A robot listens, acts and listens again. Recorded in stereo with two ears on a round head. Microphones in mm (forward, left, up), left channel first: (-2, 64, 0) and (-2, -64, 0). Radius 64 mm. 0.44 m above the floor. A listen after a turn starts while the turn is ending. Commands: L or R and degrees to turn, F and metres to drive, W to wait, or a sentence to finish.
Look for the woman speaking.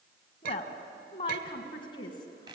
L30
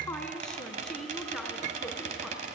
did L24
Found it: a woman speaking, straight ahead, over 4 m away.